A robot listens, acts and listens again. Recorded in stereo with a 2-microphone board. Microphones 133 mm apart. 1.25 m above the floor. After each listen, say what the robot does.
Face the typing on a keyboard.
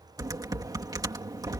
Turn 30° right.
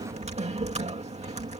Turn 125° right.
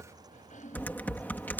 Turn 15° left.
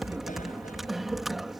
Found it: typing on a keyboard, straight ahead.